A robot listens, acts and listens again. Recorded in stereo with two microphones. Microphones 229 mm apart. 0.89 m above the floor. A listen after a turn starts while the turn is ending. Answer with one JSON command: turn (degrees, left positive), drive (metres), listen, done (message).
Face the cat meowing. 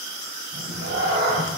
{"turn": -65}
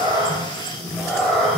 {"done": "Facing the cat meowing."}